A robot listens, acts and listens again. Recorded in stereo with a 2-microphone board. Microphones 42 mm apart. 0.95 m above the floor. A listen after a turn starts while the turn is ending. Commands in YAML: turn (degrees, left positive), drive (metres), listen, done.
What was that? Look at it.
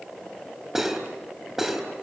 turn: -30
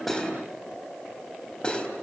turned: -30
turn: 20
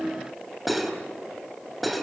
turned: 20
done: "Found it: cutlery clinking, straight ahead."